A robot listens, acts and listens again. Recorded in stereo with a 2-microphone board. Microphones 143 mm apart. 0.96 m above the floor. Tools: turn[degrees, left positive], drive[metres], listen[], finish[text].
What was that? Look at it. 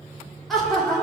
Action: turn[30]
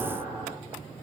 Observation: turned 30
Thought: So it is at 15° right.
Action: turn[-15]
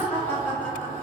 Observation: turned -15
Thought: The laughter is now 15° left.
Action: turn[15]
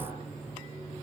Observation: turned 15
Action: listen[]
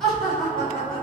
Action: finish[Found it: laughter, straight ahead, over 4 m away.]